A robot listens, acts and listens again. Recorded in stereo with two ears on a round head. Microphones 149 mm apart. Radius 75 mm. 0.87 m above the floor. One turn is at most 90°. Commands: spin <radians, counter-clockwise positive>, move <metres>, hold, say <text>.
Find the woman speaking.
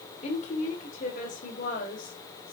spin 0.87
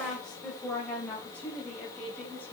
spin 0.17
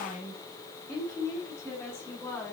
spin 0.17
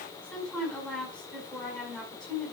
say Facing the woman speaking, over 4 m away.